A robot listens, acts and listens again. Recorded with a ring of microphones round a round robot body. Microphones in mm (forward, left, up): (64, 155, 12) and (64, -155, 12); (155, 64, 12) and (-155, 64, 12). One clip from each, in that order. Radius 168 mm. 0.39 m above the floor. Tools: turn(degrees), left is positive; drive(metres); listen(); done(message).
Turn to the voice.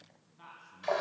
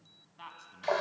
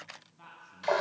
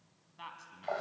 turn(degrees=-140)
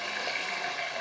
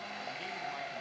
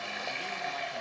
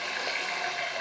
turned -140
listen()
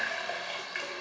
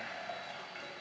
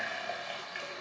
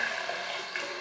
listen()
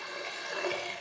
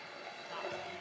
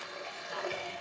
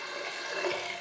done("I heard a man speaking from this way, but can't make it out now.")